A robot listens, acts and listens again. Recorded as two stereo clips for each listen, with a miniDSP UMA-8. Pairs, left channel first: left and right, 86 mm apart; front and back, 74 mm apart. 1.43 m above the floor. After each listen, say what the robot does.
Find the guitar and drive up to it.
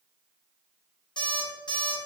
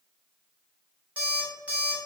Keep listening.
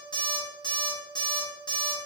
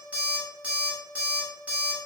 Keep listening.
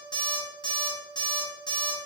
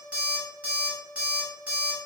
I can't make out a guitar to turn to.